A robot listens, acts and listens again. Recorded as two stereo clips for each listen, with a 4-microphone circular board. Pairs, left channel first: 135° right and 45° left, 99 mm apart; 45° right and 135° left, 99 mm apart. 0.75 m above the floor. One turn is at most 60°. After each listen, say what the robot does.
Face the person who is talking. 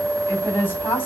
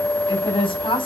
Turn 60° right.
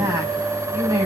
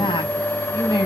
Turn 10° right.
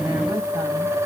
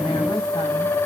Keep listening.
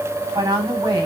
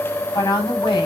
Facing the woman speaking, over 4 m away.